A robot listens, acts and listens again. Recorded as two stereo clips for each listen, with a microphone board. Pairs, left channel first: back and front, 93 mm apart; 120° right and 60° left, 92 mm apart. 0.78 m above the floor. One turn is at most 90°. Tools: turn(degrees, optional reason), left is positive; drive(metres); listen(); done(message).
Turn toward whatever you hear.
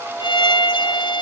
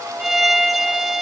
turn(degrees=90, reason="The violin: 145° left.")
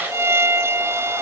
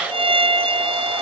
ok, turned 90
turn(degrees=65, reason="The violin is now 65° left.")
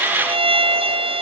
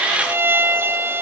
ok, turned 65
done("Found it: a violin, straight ahead.")